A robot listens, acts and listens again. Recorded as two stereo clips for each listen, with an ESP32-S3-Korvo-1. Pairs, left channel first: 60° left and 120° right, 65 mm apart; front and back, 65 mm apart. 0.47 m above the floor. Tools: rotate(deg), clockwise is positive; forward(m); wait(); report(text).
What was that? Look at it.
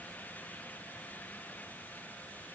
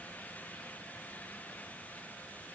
wait()
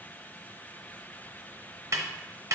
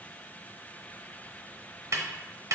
rotate(150)
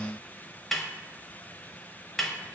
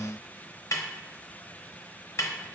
rotate(30)
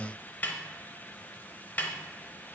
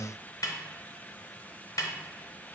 report("Found it: a snare drum, straight ahead.")